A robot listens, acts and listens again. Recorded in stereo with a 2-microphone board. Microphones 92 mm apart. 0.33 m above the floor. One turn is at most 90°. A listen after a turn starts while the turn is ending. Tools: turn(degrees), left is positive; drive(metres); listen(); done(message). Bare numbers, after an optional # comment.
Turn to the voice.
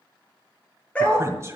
# The man speaking: about 35° right or 145° right.
turn(-35)
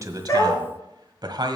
# So it is at 105° right.
turn(-90)
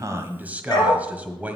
# The man speaking is now 20° right.
turn(-20)
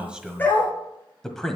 done("Found it: a man speaking, straight ahead, 1 to 2 m away.")